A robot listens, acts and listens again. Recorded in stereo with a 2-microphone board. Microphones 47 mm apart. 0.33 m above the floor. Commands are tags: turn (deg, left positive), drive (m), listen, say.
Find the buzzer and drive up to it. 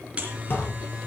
<turn deg="-25"/>
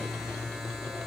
<drive m="1.0"/>
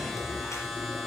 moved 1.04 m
<drive m="1.0"/>
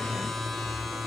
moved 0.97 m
<drive m="1.0"/>
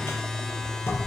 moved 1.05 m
<turn deg="10"/>
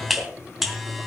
<drive m="1.0"/>
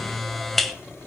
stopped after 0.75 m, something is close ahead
<say>I am next to the buzzer.</say>